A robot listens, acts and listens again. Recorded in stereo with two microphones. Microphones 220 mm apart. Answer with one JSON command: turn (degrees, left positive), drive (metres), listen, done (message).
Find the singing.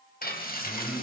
{"turn": -30}
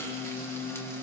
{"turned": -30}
{"done": "Found it: singing, straight ahead, over 4 m away."}